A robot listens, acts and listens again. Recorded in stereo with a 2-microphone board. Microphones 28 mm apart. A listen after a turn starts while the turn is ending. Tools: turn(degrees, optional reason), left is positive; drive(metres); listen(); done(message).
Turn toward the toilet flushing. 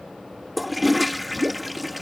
turn(degrees=-30)
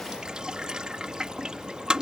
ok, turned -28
turn(degrees=-150, reason="So it is at 150° right.")
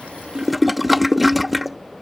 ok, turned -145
done("Found it: a toilet flushing, straight ahead.")